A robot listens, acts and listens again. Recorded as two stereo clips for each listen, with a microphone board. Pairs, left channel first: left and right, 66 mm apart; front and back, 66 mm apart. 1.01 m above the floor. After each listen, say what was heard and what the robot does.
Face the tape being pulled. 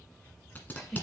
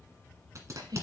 The tape being pulled: 145° left. Turn 145° left.
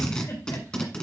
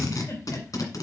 The tape being pulled is now 15° left. Turn 15° left.
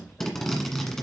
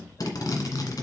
Facing the tape being pulled.